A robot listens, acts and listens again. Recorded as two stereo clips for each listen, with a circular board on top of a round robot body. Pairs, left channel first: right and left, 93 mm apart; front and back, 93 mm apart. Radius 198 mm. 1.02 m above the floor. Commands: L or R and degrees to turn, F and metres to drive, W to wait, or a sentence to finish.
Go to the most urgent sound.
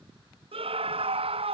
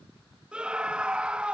L100
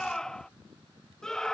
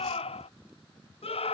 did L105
F1.0
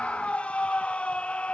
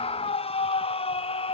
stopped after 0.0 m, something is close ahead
R10
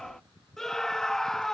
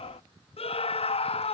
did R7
Blocked. The scream is further on, straight ahead.